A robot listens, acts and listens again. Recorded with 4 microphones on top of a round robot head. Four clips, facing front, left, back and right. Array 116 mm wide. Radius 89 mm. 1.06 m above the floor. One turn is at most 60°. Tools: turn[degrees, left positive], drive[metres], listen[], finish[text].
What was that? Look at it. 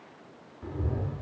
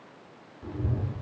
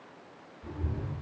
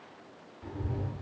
Thought: The cat meowing: 25° left.
Action: turn[25]
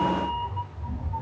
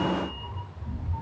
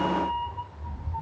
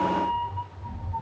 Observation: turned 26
Action: finish[Facing the cat meowing, 1 to 2 m away.]